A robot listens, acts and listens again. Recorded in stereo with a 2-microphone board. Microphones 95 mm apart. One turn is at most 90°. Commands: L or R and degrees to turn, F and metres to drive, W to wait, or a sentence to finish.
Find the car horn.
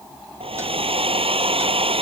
W
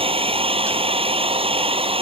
W
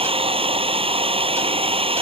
I can't make out a car horn, only a hair dryer.